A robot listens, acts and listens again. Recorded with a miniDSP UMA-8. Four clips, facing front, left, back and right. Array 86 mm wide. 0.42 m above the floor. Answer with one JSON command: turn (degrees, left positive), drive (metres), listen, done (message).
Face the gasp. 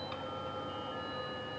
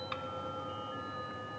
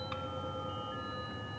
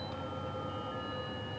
{"listen": true}
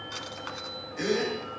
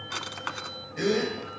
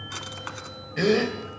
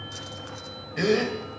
{"turn": -150}
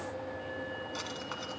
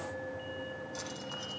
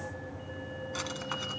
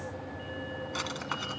{"done": "I heard a gasp from this way, but can't make it out now."}